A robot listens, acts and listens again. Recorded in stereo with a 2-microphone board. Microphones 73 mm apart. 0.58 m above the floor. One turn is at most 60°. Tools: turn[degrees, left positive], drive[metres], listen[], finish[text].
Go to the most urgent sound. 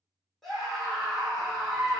Action: turn[30]
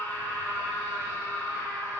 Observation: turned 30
Thought: So it is at 145° left.
Action: turn[60]
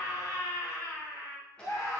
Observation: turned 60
Thought: The scream is now 90° left.
Action: turn[60]
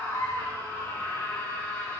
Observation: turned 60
Thought: The scream is now 25° left.
Action: turn[25]
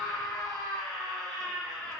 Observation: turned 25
Action: drive[1.0]
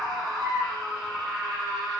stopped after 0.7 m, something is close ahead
Action: finish[I am next to the scream.]